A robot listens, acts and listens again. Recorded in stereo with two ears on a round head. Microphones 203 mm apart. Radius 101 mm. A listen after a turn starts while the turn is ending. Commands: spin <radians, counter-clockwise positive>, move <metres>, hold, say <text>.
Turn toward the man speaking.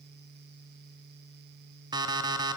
hold
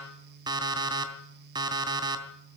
hold
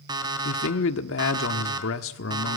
spin 1.13
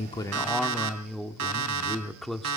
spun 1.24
say Found it: a man speaking, straight ahead.